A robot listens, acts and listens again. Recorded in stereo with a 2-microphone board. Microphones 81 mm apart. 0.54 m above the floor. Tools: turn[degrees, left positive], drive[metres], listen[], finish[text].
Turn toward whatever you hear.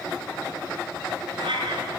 Action: turn[-90]
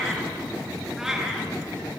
Action: finish[Facing the cat meowing, 2 to 4 m away.]